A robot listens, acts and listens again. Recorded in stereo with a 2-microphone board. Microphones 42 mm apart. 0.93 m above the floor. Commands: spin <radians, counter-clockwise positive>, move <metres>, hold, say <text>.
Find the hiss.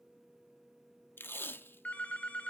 hold
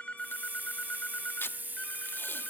spin -0.79
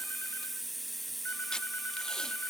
say Found it: a hiss, straight ahead, under 1 m away.